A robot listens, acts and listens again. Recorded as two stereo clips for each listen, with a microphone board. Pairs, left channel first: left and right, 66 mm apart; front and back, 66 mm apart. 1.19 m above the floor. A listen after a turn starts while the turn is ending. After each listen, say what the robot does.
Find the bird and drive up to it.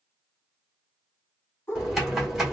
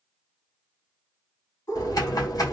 Turn 35° left.
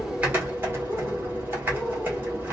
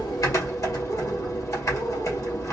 Keep listening.
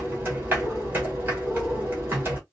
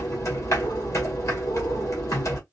Keep listening.
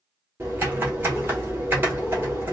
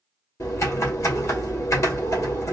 Facing where the bird came from. I can't hear it now. I did not reach it.